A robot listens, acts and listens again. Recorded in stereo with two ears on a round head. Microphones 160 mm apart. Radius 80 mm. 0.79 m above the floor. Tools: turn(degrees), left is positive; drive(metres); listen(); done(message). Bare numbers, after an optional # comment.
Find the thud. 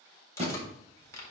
# The thud: about 40° right or 140° right.
turn(-40)
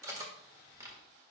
listen()
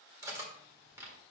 done("I heard a thud, but can't make it out now. It was about straight ahead or 100° right.")